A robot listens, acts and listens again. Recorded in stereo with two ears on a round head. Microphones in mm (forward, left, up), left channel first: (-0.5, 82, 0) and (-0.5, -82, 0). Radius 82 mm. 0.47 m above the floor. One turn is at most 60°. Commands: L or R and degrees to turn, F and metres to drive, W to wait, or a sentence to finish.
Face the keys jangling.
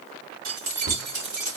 R60
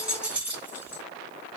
R10
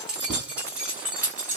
R10
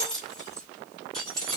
Facing the keys jangling.